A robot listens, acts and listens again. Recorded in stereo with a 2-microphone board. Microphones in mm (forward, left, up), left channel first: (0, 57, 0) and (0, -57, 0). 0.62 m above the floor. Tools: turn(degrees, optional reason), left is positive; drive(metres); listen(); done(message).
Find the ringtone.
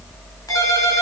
turn(degrees=30, reason="The ringtone: about 30° left or 150° left.")
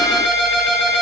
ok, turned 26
done("Facing the ringtone, 2 to 4 m away.")